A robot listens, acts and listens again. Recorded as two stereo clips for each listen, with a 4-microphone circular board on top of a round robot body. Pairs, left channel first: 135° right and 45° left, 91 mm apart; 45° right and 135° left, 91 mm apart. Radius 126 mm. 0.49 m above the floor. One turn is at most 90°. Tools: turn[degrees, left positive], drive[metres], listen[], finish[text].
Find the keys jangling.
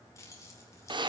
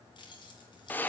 Thought: The keys jangling: 75° right.
Action: turn[-75]
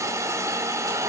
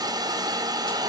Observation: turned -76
Action: listen[]
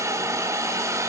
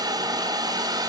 Action: listen[]
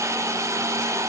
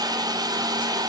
Action: finish[I heard keys jangling from this way, but can't make it out now.]